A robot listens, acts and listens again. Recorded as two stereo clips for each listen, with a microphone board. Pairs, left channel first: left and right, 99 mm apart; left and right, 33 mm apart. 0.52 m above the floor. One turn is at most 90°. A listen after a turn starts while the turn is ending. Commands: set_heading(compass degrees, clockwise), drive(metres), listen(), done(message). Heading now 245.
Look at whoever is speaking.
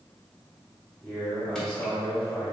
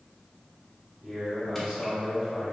set_heading(215)
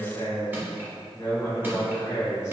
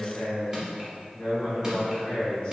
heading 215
set_heading(125)
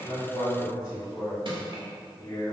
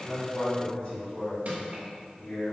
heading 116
set_heading(76)
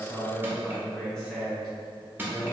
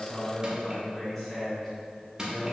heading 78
done("Found it: a man speaking, straight ahead, 1 to 2 m away.")